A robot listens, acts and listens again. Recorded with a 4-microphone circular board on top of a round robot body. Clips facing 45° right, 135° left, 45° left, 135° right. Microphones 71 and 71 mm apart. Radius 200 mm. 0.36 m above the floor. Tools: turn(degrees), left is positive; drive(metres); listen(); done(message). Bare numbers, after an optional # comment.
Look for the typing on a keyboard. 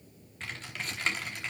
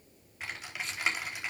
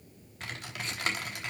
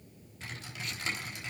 # The typing on a keyboard: 55° left.
turn(55)
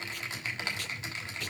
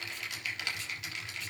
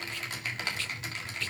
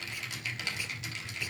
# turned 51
done("Found it: typing on a keyboard, straight ahead.")